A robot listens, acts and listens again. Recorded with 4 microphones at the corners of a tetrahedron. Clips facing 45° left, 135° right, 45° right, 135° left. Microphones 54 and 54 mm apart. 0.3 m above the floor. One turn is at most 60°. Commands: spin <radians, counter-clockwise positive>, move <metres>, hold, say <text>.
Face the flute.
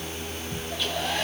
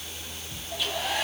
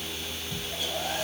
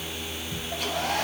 hold
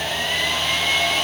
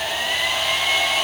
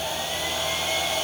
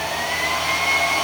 hold
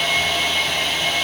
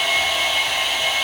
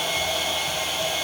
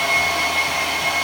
say I can't make out a flute to turn to.